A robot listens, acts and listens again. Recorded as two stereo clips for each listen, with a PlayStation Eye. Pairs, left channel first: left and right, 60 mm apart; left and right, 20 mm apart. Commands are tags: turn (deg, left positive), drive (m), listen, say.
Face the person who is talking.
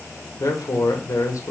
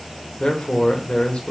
<turn deg="70"/>
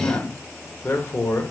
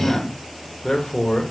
<turn deg="45"/>
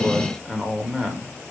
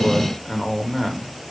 <say>Facing the man speaking, 1 to 2 m away.</say>